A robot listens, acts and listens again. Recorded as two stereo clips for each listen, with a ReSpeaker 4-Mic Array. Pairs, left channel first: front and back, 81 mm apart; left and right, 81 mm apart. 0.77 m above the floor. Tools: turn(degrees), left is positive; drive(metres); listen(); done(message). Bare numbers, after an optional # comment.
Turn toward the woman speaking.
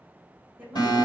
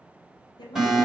# The woman speaking: 110° left.
turn(110)
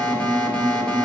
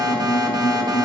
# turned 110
listen()
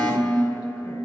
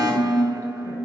listen()
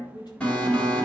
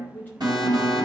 # The woman speaking is now 20° left.
turn(20)
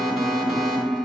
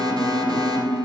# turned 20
listen()
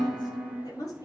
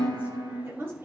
# The woman speaking is now 35° right.
turn(-35)
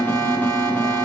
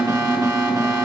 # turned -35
listen()
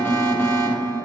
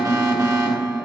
listen()
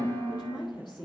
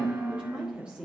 # The woman speaking is now 15° right.
turn(-15)
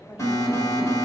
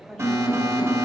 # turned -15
done("Facing the woman speaking.")